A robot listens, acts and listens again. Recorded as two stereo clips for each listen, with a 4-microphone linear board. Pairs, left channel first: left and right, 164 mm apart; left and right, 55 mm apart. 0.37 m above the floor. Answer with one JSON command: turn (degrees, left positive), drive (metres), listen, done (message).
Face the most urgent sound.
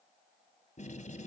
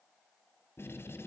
{"listen": true}
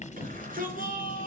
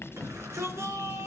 {"turn": -55}
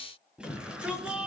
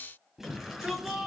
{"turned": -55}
{"done": "Found it: a shout, straight ahead."}